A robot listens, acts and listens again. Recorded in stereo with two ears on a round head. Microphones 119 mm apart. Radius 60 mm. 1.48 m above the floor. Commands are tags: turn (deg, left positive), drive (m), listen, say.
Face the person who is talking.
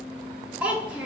<turn deg="-30"/>
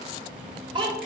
<turn deg="-140"/>
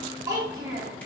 <turn deg="-25"/>
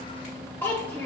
<turn deg="15"/>
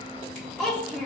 <say>Found it: a child speaking, straight ahead.</say>